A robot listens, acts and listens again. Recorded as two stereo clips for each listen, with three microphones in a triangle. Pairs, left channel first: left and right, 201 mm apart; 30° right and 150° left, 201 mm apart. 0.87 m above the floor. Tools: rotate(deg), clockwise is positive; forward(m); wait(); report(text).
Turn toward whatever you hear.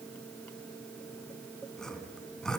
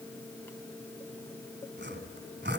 rotate(-175)
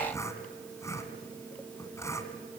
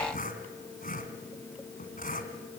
rotate(-15)
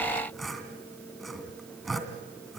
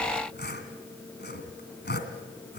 report("Facing the sawing.")